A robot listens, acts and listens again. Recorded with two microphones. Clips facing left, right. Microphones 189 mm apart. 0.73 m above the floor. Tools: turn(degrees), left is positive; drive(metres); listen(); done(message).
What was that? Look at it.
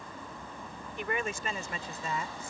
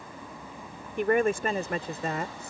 turn(degrees=-60)
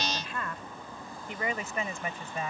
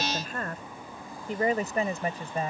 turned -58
turn(degrees=-35)
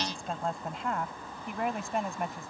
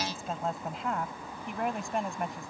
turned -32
done("Facing the woman speaking.")